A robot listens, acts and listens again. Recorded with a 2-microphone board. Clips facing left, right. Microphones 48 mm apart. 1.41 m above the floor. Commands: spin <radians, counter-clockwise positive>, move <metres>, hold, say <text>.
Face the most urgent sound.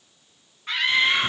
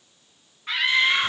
spin 0.52
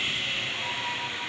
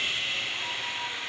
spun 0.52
hold
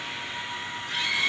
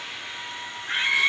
spin -0.52
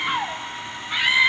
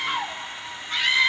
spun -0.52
spin 0.26
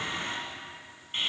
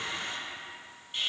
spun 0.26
hold
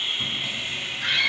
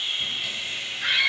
say Found it: a scream, straight ahead.